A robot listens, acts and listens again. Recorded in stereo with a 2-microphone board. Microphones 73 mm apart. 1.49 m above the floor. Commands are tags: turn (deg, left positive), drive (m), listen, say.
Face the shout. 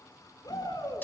<turn deg="70"/>
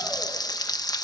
<listen/>
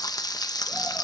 <listen/>
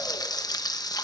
<say>I heard a shout, but can't make it out now. It was about straight ahead or 40° left.</say>